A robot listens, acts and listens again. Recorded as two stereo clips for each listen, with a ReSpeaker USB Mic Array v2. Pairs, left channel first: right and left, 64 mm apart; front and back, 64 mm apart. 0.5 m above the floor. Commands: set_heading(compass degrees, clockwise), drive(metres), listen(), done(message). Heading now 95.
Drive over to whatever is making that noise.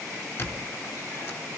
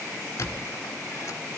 set_heading(135)
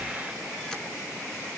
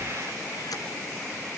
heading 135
listen()
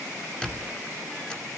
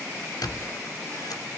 set_heading(150)
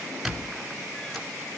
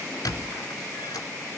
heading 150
drive(1.0)
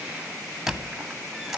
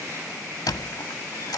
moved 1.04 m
drive(1.0)
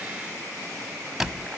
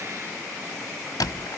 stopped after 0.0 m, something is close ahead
done("Arrived at the squeak, straight ahead.")